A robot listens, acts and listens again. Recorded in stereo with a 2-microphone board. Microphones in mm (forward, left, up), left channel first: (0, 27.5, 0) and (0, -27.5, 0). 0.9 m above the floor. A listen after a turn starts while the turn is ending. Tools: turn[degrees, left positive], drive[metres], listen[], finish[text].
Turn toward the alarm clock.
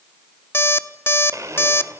Thought: The alarm clock: about 45° left or 135° left.
Action: turn[45]
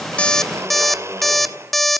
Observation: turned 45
Action: finish[Found it: an alarm clock, straight ahead, under 1 m away.]